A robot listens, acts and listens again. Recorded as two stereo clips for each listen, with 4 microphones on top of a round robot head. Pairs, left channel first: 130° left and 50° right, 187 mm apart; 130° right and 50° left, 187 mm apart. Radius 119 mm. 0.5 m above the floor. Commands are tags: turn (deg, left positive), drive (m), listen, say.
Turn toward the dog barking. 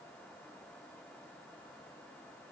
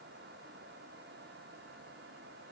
<listen/>
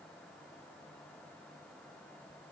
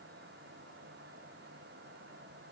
<listen/>
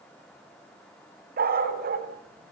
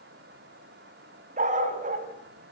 <say>Facing the dog barking, 2 to 4 m away.</say>